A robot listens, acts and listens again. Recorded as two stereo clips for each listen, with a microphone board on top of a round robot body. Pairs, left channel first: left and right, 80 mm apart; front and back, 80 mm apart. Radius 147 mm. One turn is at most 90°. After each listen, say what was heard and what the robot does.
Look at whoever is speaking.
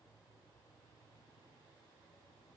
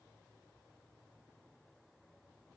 Keep listening.
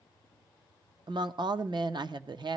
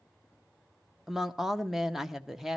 The woman speaking: 95° right. Turn 90° right.
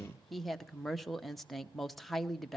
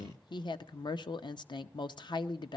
Facing the woman speaking, under 1 m away.